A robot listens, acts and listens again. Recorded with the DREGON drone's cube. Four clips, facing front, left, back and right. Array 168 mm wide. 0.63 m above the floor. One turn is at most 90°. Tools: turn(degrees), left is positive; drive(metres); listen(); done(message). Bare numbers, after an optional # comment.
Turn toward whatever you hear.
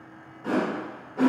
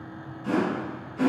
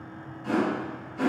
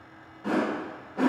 # The whoosh: 55° right.
turn(-55)
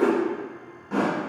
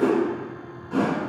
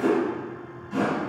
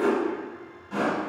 # The whoosh is now 15° left.
turn(15)
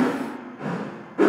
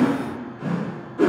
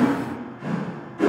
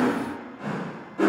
done("Found it: a whoosh, straight ahead.")